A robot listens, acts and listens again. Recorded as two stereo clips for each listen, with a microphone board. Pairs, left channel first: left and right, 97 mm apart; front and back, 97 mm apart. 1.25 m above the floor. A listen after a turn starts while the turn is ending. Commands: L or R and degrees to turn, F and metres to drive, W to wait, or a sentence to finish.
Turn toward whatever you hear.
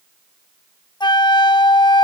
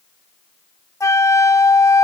L55
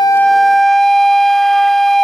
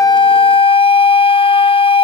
Facing the flute.